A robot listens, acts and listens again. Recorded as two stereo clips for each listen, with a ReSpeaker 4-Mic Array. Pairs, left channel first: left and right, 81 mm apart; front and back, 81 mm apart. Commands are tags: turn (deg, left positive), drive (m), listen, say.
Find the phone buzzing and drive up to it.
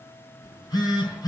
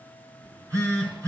<turn deg="130"/>
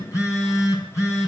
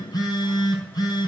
<turn deg="40"/>
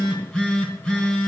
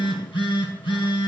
<turn deg="10"/>
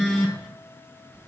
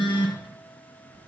<drive m="1.0"/>
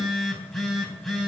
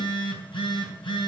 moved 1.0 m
<drive m="1.0"/>
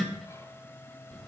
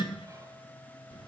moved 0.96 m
<drive m="1.0"/>
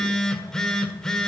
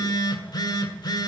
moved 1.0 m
<turn deg="10"/>
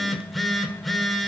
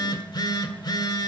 <drive m="1.0"/>
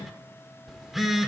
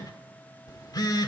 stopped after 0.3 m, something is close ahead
<say>Arrived at the phone buzzing, straight ahead.</say>